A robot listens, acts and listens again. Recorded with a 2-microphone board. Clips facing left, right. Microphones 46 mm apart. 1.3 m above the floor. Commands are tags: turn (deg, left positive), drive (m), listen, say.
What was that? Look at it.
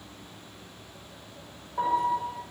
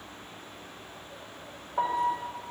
<turn deg="-25"/>
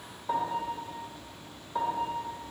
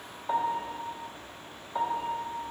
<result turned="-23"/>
<say>Found it: a piano, straight ahead.</say>